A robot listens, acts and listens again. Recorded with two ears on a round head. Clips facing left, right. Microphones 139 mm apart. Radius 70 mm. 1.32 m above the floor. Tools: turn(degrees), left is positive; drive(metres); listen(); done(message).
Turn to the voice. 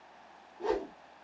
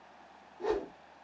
listen()
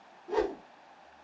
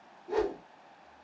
listen()
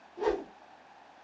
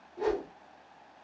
done("I can't make out anyone speaking to turn to.")